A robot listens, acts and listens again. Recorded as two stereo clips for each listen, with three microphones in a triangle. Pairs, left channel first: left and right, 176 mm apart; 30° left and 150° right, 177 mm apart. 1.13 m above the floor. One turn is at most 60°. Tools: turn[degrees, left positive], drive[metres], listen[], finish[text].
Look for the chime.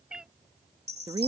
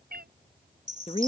Thought: The chime: 105° right.
Action: turn[-60]
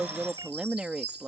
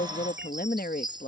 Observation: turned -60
Thought: The chime is now 85° right.
Action: turn[-60]
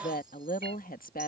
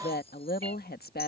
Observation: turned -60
Thought: Nothing new. It was at 25° right.
Action: turn[-25]
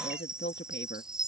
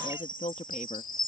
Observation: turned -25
Action: finish[Found it: a chime, straight ahead.]